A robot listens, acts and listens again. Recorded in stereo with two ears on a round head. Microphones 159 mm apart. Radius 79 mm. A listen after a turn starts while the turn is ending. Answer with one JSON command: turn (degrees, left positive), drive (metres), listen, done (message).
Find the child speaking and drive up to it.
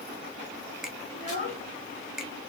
{"turn": 50}
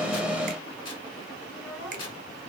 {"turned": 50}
{"drive": 1.0}
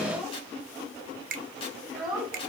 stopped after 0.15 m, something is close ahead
{"done": "Something is in my way. I am facing the child speaking but have not reached it."}